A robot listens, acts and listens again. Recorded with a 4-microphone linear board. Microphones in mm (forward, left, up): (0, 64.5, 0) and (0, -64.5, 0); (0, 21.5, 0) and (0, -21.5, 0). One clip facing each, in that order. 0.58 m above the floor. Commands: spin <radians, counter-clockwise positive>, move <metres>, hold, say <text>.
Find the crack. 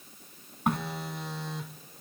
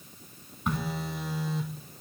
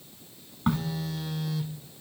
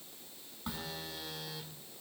spin 0.96
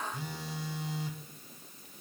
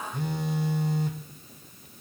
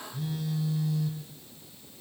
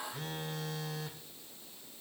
hold
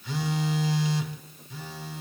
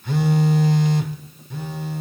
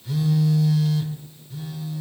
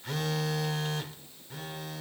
say I heard a crack, but can't make it out now. It was about straight ahead or 70° left.